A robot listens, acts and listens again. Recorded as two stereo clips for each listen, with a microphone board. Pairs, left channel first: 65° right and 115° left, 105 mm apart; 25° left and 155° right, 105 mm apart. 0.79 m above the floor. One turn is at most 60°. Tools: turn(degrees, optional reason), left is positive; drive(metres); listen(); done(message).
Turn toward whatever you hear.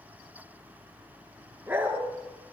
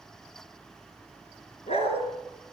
turn(degrees=40, reason="The dog barking: 40° left.")
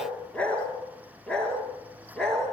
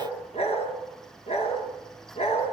turn(degrees=15, reason="The dog barking is now 15° left.")
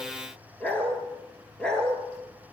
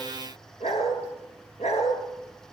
turn(degrees=15, reason="The dog barking is now 15° left.")
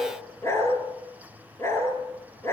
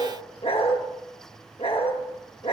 done("Found it: a dog barking, straight ahead, over 4 m away.")